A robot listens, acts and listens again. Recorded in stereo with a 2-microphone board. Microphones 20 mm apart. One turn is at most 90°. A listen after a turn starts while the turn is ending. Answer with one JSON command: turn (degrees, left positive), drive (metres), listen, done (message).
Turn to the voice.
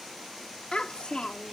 {"turn": 65}
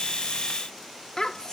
{"turn": 45}
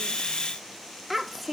{"done": "Found it: a child speaking, straight ahead."}